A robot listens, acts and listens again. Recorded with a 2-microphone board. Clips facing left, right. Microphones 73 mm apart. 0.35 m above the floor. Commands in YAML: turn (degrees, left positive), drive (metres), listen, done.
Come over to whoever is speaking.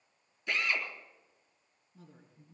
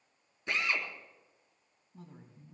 turn: -60
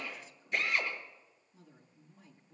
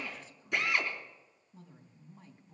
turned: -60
turn: -50
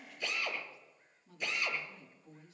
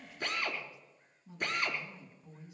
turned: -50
turn: -15
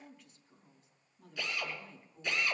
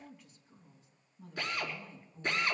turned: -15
drive: 1.0
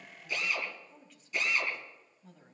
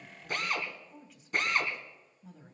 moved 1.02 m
drive: 1.0
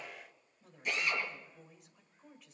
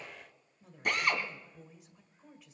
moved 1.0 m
drive: 1.0
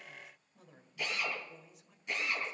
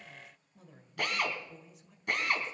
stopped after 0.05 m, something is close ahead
done: "I am next to the woman speaking."